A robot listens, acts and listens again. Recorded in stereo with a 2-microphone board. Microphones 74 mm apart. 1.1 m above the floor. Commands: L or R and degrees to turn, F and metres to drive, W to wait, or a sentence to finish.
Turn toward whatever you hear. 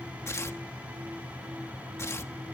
L40
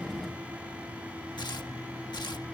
L105
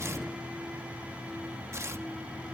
R40
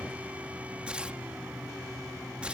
R15
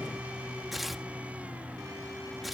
Found it: tearing paper, straight ahead.